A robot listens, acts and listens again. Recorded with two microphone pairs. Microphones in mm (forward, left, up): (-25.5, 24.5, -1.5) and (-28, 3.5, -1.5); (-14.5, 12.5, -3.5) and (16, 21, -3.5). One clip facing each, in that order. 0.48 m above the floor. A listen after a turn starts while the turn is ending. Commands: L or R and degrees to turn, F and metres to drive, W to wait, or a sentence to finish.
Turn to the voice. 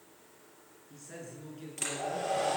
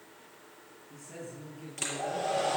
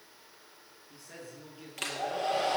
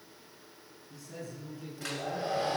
L135
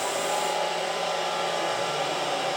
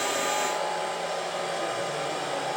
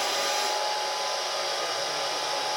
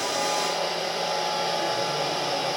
W
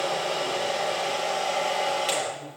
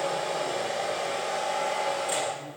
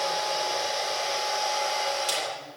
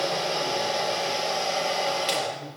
W
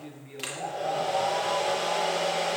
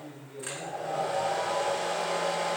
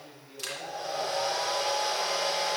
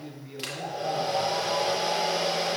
L55
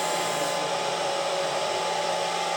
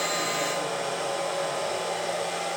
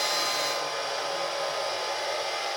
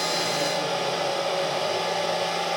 W
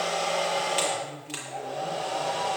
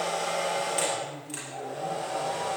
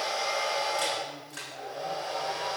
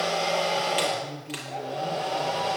Found it: a man speaking, straight ahead.